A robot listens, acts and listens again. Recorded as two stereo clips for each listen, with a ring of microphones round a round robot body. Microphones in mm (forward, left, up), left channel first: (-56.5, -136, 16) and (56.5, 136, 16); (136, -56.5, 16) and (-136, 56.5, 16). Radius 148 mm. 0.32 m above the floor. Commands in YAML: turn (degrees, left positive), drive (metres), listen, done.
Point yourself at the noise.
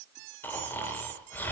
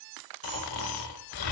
turn: -30
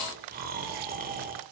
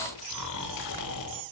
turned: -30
done: "Facing the snoring."